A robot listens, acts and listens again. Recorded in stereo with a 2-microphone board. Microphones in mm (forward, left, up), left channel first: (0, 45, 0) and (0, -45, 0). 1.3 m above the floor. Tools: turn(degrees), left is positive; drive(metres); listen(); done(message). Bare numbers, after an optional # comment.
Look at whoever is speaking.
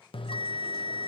listen()
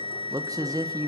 # The man speaking: about 45° right or 135° right.
turn(-45)
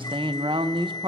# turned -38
# So it is at 95° right.
turn(-95)
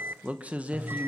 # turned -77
# The man speaking is now 15° right.
turn(-15)
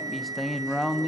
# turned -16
done("Facing the man speaking.")